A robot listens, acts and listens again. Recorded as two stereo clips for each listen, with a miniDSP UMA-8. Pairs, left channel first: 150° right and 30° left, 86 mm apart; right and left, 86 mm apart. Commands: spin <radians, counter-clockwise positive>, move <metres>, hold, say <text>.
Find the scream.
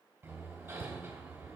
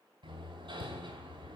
hold
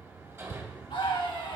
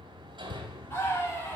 spin -2.62
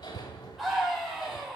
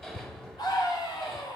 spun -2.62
spin -0.96
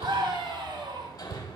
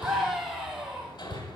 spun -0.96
say Facing the scream.